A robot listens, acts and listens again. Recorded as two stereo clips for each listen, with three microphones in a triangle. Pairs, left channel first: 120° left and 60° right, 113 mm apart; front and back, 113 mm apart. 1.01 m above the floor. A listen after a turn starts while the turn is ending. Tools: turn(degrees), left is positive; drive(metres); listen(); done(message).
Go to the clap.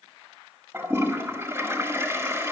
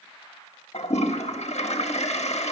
listen()
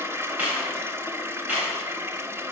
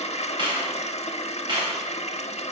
turn(degrees=-135)
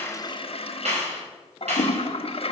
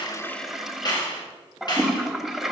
turn(degrees=-50)
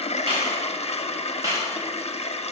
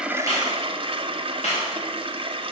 drive(metres=1.0)
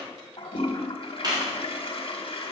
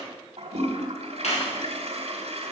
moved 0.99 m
drive(metres=1.0)
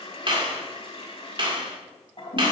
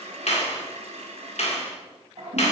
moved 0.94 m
turn(degrees=-15)
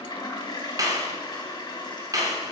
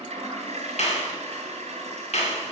drive(metres=1.0)
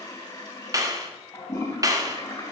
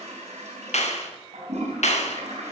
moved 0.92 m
drive(metres=1.0)
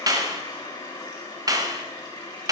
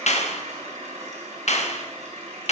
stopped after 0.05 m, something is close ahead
done("Arrived at the clap, straight ahead.")